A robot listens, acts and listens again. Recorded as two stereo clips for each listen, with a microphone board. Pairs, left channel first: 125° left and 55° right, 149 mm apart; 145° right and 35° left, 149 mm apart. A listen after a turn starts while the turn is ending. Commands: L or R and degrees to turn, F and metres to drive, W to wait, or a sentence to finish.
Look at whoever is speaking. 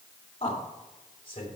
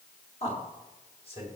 L170
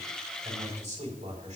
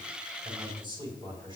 R20
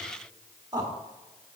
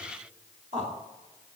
Found it: a man speaking, straight ahead.